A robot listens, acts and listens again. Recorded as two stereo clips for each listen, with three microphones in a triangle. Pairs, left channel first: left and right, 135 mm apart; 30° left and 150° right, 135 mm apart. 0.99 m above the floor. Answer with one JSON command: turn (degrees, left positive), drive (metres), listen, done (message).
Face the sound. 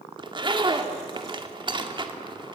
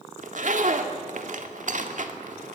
{"turn": -140}
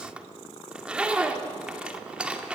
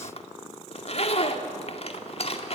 {"turn": -10}
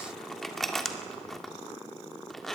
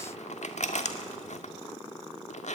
{"done": "Found it: a zipper, straight ahead."}